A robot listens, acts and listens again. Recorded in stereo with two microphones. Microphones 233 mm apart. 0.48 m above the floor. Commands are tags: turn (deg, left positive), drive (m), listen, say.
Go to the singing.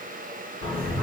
<turn deg="-40"/>
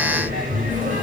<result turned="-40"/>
<turn deg="-90"/>
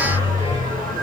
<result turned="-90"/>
<turn deg="-35"/>
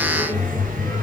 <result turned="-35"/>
<drive m="1.0"/>
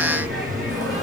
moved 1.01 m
<drive m="1.0"/>
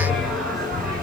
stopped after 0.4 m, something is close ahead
<say>I am next to the singing.</say>